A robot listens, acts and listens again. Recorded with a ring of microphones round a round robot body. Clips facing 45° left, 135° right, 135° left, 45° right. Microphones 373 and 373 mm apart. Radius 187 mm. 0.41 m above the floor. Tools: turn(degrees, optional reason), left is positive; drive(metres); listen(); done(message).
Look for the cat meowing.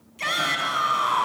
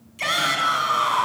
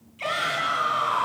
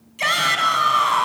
listen()
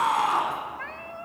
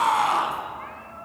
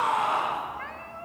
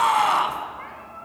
turn(degrees=65, reason="The cat meowing: 65° left.")
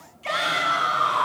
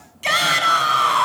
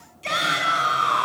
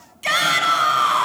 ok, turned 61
listen()
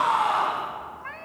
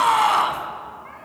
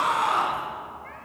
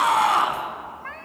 done("Facing the cat meowing, 1 to 2 m away.")